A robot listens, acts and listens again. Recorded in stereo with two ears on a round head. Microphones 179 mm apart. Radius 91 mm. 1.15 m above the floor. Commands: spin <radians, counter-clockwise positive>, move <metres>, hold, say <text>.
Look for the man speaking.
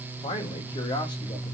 spin 0.35
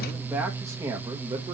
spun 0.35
spin -0.35
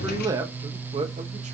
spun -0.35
spin -0.52
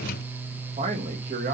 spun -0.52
spin -0.70
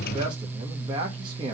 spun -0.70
spin -0.35
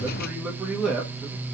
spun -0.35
say Facing the man speaking.